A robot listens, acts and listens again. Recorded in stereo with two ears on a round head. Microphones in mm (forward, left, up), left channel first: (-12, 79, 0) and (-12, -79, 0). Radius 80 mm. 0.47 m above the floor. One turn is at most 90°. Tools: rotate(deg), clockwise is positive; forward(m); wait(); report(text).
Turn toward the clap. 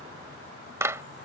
rotate(15)
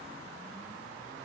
wait()
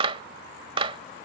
rotate(90)
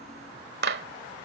rotate(65)
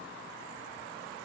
wait()
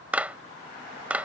rotate(10)
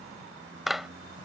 report("Found it: a clap, straight ahead.")